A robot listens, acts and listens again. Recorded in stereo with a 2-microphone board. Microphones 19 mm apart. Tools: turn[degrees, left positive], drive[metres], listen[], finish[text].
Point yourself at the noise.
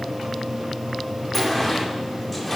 Action: turn[30]
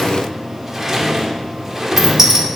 Thought: So it is at 25° right.
Action: turn[-25]
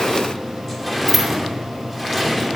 Action: finish[Facing the sliding door, 1 to 2 m away.]